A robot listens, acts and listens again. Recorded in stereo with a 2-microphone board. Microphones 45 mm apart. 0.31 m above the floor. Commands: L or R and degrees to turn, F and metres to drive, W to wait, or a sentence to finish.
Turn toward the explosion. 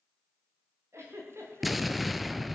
L30
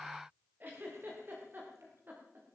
W
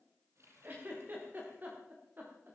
I heard an explosion, but can't make it out now. It was about 30° right or 150° left.